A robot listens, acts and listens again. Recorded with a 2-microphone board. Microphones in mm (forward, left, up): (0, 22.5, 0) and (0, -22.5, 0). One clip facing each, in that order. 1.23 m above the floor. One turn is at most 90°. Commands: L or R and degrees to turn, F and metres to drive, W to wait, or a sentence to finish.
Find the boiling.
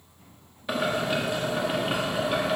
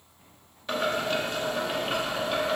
L30
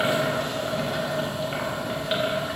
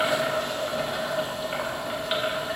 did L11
Facing the boiling.